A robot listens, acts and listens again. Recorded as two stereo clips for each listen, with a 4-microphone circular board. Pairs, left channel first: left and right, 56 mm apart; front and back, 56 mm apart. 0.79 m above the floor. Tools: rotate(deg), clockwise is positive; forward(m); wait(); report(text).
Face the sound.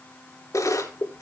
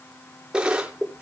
rotate(-105)
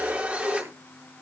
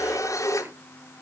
rotate(20)
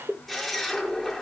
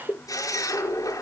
report("Facing the camera shutter.")